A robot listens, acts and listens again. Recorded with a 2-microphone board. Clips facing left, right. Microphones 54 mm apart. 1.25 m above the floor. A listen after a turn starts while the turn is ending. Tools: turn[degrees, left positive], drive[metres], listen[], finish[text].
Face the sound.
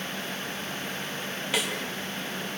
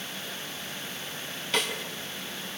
Action: turn[30]
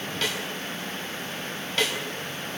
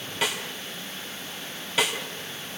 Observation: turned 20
Thought: So it is at 10° right.
Action: turn[-10]
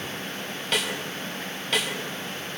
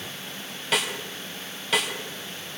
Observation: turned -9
Action: finish[Facing the snare drum, 2 to 4 m away.]